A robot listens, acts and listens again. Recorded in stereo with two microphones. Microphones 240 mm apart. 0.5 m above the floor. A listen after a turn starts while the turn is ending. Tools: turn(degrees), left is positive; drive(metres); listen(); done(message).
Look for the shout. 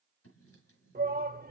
turn(degrees=-45)
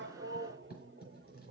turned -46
turn(degrees=-80)
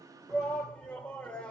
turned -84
done("Facing the shout.")